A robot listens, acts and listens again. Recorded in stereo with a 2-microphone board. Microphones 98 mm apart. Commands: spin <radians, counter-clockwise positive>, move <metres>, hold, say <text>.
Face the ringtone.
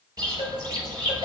spin -1.31
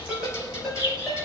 say Facing the ringtone, over 4 m away.